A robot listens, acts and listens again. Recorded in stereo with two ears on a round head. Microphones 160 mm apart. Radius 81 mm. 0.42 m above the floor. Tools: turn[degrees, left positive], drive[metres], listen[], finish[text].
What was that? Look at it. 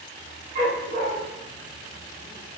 Thought: The dog barking: about 50° right or 130° right.
Action: turn[-50]
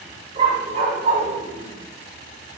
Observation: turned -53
Thought: So it is at 45° right.
Action: turn[-45]
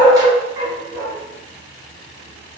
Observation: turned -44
Thought: The dog barking is now 30° right.
Action: turn[-30]
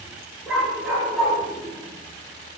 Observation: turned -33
Action: finish[Facing the dog barking.]